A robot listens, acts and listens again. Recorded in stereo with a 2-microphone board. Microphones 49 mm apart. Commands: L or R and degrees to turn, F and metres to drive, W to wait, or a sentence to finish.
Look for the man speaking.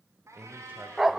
R35
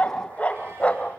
W
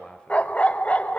L15
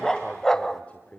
L30
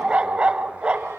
W
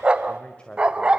L20
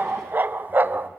W
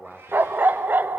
Facing the man speaking, 1 to 2 m away.